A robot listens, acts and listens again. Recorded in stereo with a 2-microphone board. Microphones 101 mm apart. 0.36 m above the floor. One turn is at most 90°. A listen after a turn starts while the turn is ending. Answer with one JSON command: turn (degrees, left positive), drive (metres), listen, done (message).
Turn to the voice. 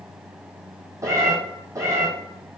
{"listen": true}
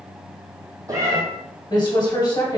{"turn": 45}
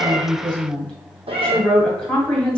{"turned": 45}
{"turn": 10}
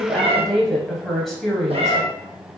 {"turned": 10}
{"done": "Facing the woman speaking."}